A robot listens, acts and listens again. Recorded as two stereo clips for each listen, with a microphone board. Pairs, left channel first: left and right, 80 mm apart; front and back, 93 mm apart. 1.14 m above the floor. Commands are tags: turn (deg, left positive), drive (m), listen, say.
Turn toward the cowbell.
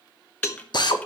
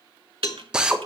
<turn deg="40"/>
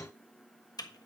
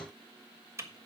<listen/>
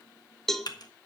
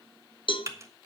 <say>Found it: a cowbell, straight ahead.</say>